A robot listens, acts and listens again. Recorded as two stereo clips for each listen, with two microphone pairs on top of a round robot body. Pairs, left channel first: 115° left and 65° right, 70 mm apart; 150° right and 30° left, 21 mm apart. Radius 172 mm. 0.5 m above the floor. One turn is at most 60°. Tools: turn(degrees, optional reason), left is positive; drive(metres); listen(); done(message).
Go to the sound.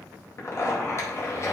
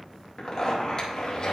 turn(degrees=60, reason="The zipper: 155° left.")
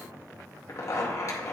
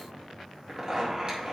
turn(degrees=60, reason="The zipper is now 80° left.")
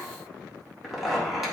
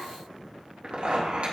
turn(degrees=25, reason="The zipper is now 25° left.")
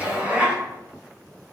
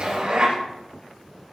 drive(metres=1.0)
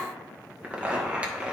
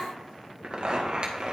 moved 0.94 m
drive(metres=1.0)
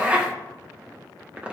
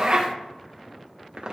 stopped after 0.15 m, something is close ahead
done("I am next to the zipper.")